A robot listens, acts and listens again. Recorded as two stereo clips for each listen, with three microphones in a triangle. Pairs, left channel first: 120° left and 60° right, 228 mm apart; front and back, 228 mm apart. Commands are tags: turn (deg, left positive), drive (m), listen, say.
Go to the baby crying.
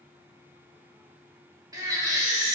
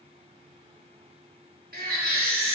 <turn deg="-135"/>
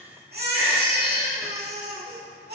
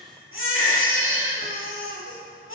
<turn deg="-20"/>
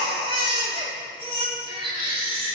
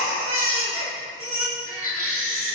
<drive m="1.0"/>
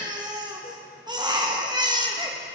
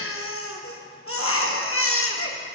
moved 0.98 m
<turn deg="10"/>
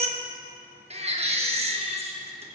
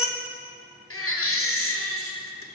<drive m="1.0"/>
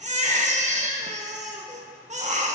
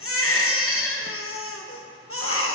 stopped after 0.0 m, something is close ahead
<say>Arrived at the baby crying, straight ahead.</say>